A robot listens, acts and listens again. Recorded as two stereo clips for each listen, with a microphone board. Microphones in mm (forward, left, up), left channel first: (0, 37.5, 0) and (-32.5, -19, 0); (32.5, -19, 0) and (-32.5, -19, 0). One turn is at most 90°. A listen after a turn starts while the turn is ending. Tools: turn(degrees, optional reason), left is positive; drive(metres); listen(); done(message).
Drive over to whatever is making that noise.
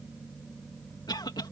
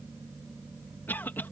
turn(degrees=60, reason="The cough: 60° left.")
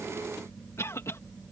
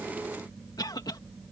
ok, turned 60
turn(degrees=10, reason="The cough is now 10° left.")
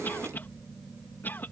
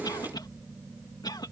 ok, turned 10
drive(metres=1.0)
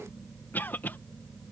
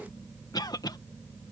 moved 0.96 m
drive(metres=1.0)
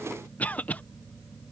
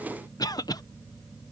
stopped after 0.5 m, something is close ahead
done("Arrived at the cough, straight ahead.")